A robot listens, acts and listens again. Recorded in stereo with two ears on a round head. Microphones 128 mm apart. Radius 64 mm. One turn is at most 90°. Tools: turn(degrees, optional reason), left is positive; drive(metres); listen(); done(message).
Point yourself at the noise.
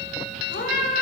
turn(degrees=65, reason="The cat meowing: about 65° left or 115° left.")
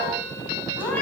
turn(degrees=10, reason="So it is at 10° left.")
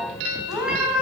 done("Facing the cat meowing.")